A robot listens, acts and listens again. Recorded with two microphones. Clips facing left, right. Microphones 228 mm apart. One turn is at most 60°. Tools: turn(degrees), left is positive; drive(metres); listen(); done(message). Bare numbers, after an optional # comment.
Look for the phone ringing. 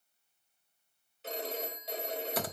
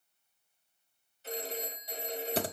# The phone ringing: about 70° left or 110° left.
turn(60)
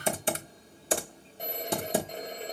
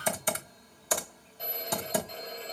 # So it is at 50° left.
turn(50)
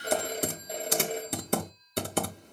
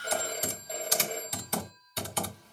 # The phone ringing is now 20° left.
turn(20)
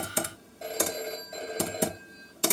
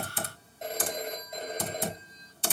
done("Found it: a phone ringing, straight ahead.")